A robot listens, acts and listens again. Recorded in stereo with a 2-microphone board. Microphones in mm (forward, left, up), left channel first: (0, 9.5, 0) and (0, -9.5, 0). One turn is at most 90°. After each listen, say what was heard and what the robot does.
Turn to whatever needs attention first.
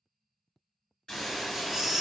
The baby crying: about 25° right or 155° right. Turn 25° right.
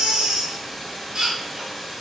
So it is at 125° right. Turn 90° right.
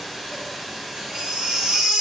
The baby crying is now 65° right. Turn 65° right.
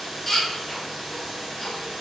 The baby crying is now 15° left. Turn 15° left.
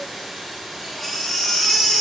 The baby crying is now 10° left. Turn 10° left.
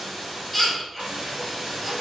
Facing the baby crying.